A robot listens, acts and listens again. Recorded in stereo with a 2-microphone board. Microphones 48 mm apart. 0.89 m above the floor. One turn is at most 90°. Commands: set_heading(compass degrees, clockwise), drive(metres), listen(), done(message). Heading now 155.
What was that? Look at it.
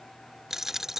set_heading(185)
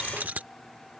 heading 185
set_heading(275)
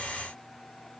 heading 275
set_heading(325)
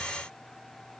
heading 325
done("Facing where the dropped coin came from. I can't hear it now.")